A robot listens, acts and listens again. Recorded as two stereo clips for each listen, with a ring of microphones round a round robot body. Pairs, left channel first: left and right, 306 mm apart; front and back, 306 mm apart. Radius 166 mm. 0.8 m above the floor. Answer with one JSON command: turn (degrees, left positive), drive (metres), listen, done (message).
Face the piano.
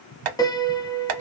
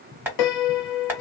{"turn": 10}
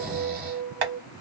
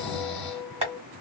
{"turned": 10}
{"done": "Facing the piano, under 1 m away."}